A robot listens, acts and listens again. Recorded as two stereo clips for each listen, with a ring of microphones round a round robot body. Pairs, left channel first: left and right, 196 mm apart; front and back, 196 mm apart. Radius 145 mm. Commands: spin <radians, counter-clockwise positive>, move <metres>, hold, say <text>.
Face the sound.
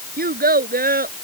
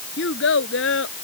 spin -0.79
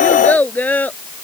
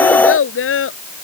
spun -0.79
spin 0.17
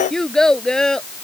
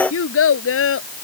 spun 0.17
say Facing the child speaking.